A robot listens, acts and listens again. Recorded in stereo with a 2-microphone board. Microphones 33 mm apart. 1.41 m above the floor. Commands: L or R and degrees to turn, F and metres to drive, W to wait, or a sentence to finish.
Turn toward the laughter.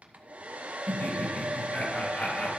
L55
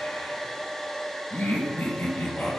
L85
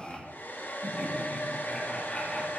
L25
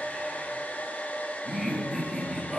Facing the laughter.